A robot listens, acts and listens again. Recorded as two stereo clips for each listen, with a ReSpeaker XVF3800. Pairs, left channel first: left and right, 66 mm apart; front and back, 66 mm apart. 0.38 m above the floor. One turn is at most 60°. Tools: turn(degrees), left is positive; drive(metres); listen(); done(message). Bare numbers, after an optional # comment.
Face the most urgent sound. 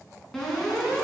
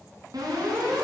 # The alarm: 170° left.
turn(60)
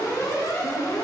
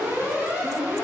# The alarm is now 110° left.
turn(60)
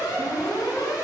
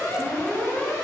# The alarm is now 60° left.
turn(60)
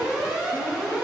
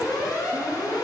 # The alarm is now 15° right.
turn(-15)
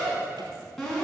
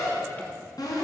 done("Found it: an alarm, straight ahead, over 4 m away.")